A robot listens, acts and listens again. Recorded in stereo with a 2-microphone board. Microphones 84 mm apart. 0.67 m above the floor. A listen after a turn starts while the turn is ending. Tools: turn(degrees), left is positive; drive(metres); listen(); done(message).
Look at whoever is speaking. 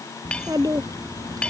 turn(degrees=-50)
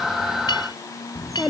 done("Facing the child speaking.")